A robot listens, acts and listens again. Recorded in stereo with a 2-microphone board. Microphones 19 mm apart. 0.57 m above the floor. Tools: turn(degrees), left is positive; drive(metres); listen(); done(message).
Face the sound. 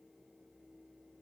listen()
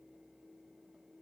listen()
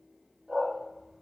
turn(degrees=-90)
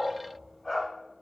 turn(degrees=10)
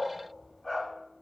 done("Facing the dog barking.")